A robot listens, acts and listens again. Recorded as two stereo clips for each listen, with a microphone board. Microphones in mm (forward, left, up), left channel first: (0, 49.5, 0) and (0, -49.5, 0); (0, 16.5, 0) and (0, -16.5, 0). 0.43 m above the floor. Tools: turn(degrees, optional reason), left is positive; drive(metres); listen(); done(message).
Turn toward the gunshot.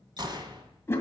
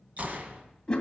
turn(degrees=-50, reason="The gunshot: about 50° right or 130° right.")
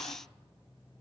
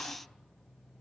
listen()
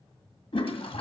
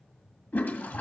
done("I heard a gunshot, but can't make it out now. It was about straight ahead or 80° right.")